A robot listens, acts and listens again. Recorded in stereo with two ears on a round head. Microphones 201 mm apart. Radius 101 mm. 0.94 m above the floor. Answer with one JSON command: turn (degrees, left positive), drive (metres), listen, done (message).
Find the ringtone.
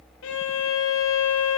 {"listen": true}
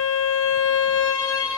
{"listen": true}
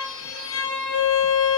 {"done": "I can't make out a ringtone to turn to."}